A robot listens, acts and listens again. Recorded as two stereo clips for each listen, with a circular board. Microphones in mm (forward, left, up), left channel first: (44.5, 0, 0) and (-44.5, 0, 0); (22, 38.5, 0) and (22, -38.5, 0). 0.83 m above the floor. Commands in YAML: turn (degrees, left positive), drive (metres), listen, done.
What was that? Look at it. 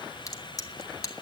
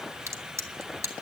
turn: -45
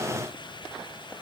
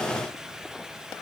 done: "I heard a crack from this way, but can't make it out now."